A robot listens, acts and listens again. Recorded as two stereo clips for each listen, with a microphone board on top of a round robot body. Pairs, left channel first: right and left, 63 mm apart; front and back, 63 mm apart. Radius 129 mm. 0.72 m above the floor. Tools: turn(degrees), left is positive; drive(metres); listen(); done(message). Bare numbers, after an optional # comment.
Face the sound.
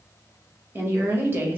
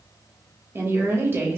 # The woman speaking: 140° left.
turn(140)
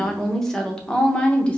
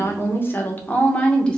# The woman speaking is now 55° right.
turn(-55)
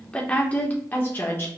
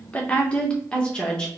# The woman speaking is now 70° right.
turn(-70)
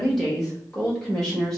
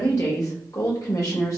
done("Facing the woman speaking.")